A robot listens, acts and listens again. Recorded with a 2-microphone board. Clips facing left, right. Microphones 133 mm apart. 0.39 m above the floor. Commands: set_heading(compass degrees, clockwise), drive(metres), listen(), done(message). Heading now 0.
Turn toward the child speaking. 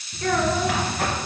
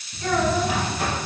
set_heading(305)
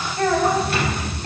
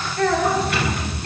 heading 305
set_heading(280)
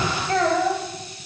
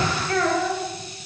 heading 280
set_heading(245)
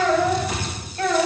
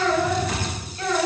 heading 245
set_heading(180)
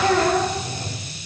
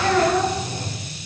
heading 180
set_heading(155)
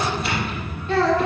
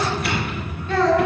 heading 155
done("Facing the child speaking, 1 to 2 m away.")